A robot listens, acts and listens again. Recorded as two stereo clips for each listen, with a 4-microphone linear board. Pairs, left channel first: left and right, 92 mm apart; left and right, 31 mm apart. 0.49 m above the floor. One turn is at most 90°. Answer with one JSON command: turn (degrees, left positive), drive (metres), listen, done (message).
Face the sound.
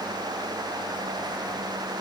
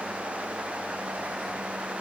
{"listen": true}
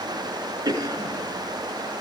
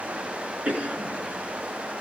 {"turn": -40}
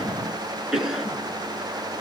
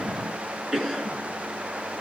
{"done": "Facing the cough."}